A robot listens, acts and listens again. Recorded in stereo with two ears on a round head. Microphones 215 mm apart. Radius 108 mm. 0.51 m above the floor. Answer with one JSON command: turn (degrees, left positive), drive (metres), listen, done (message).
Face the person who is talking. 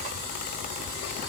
{"listen": true}
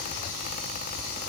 {"listen": true}
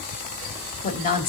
{"turn": 35}
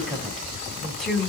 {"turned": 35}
{"done": "Facing the woman speaking, 2 to 4 m away."}